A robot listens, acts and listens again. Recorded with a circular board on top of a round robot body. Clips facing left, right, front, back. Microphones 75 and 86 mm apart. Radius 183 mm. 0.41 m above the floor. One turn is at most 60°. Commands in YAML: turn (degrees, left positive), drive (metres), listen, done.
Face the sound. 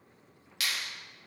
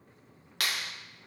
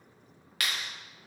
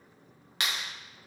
turn: -60
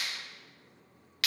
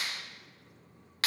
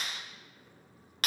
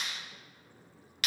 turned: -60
turn: -40
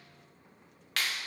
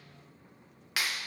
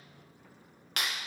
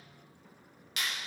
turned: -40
turn: -10
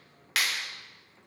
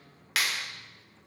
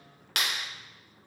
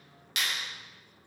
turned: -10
done: "Found it: a clap, straight ahead."